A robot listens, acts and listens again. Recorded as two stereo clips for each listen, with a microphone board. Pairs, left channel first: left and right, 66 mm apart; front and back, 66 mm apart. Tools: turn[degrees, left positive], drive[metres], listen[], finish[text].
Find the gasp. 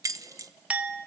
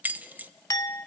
Action: listen[]
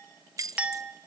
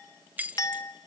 Action: listen[]
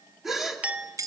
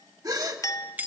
Thought: The gasp: 175° right.
Action: turn[-175]
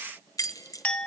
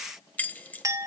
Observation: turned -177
Action: finish[I heard a gasp from this way, but can't make it out now.]